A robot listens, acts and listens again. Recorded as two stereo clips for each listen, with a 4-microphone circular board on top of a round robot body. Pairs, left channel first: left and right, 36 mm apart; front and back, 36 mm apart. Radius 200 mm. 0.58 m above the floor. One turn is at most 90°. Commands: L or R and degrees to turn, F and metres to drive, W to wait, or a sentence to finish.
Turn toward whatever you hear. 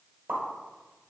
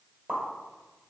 R90
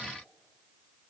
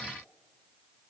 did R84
R30
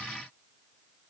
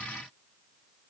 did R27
Facing where the pop came from. I can't hear it now.